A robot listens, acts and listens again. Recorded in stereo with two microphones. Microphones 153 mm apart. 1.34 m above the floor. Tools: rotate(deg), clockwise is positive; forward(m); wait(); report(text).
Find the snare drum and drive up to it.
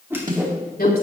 rotate(60)
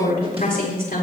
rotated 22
wait()
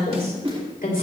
rotate(40)
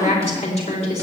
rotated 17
rotate(20)
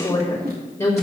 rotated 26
wait()
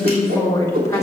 report("Facing where the snare drum came from. I can't hear it now. I did not reach it.")